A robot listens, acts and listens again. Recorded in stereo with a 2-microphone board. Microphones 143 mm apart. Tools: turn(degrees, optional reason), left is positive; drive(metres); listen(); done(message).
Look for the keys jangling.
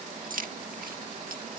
turn(degrees=-90)
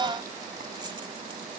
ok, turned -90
listen()
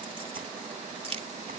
turn(degrees=-45, reason="The keys jangling is now 45° right.")
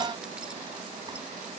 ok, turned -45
listen()
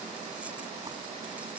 listen()
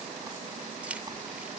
turn(degrees=-10, reason="The keys jangling is now 10° right.")
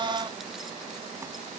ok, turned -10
listen()
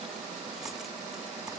listen()
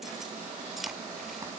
done("Found it: keys jangling, straight ahead.")